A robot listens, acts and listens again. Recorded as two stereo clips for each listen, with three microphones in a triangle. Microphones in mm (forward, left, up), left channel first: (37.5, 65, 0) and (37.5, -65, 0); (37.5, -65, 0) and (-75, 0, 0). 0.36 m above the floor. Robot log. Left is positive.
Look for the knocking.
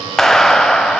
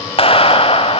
cmd idle
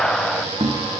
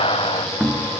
note: The knocking: 125° right.
cmd yaw -125
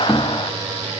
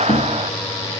cmd idle
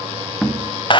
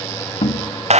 end: Found it: knocking, straight ahead, 1 to 2 m away.